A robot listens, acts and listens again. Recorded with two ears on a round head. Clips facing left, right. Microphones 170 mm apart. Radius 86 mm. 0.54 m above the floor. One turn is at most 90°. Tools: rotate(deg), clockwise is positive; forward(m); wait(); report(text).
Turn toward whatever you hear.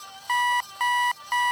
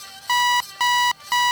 rotate(55)
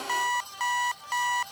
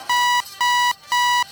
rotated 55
rotate(70)
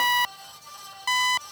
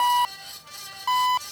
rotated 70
rotate(-20)
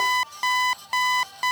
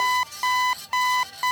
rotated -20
report("Found it: an alarm clock, straight ahead.")